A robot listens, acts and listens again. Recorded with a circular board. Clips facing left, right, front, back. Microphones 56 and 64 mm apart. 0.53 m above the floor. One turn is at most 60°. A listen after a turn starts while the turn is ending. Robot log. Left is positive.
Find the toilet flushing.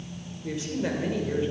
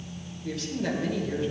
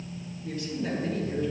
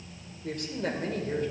cmd idle
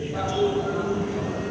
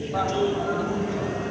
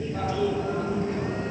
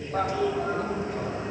note: The toilet flushing: 150° right.
cmd yaw -60
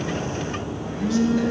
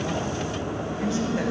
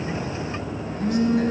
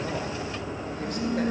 note: The toilet flushing is now 100° right.
cmd yaw -60
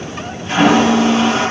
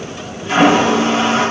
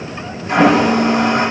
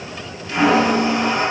note: The toilet flushing is now 30° right.
cmd yaw -30
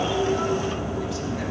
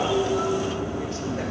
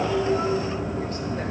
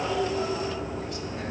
end: Facing the toilet flushing.